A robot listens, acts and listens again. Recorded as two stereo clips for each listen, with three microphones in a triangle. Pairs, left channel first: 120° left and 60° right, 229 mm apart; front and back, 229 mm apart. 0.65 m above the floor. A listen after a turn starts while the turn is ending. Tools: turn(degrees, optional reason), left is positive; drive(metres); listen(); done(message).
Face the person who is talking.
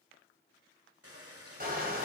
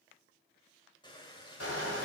listen()
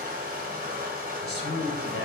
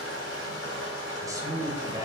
turn(degrees=105, reason="The man speaking: 105° left.")
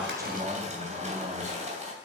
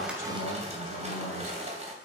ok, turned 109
listen()
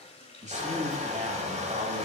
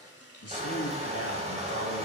done("Found it: a man speaking, straight ahead, 2 to 4 m away.")